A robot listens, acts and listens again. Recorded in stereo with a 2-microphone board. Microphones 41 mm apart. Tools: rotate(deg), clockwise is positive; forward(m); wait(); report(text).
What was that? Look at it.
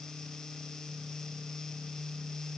wait()
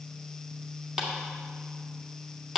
rotate(30)
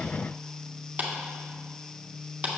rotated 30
rotate(135)
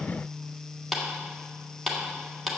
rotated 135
report("Found it: a clap, straight ahead.")